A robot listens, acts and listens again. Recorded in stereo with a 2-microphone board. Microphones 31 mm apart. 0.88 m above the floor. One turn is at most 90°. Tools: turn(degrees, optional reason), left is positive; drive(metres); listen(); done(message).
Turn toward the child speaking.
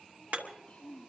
turn(degrees=35, reason="The child speaking: about 35° left or 145° left.")
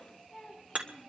done("Found it: a child speaking, straight ahead.")